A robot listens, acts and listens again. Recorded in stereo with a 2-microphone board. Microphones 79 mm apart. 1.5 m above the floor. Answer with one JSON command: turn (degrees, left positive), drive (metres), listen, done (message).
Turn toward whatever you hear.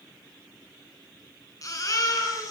{"turn": 45}
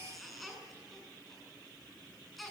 {"done": "Found it: a baby crying, straight ahead."}